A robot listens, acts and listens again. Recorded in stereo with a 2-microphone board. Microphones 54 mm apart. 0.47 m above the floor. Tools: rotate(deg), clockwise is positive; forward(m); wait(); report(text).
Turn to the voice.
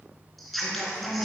rotate(-30)
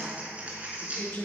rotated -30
rotate(-140)
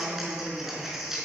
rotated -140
report("Found it: a woman speaking, straight ahead.")